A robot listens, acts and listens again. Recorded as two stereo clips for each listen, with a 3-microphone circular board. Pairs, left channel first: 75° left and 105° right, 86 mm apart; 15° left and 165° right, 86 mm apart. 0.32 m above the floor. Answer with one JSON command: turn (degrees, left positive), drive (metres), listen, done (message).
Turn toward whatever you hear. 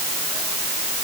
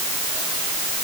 {"listen": true}
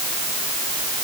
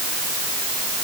{"listen": true}
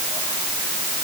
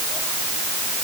{"done": "I can't make out anything to turn to."}